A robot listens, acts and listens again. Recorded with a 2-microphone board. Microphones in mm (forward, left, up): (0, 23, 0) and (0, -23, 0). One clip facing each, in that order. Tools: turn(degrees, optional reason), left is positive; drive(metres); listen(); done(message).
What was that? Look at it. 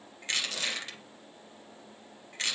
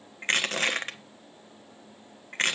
turn(degrees=-50, reason="The crushing: about 50° right or 130° right.")
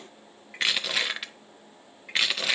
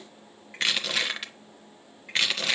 done("Facing the crushing.")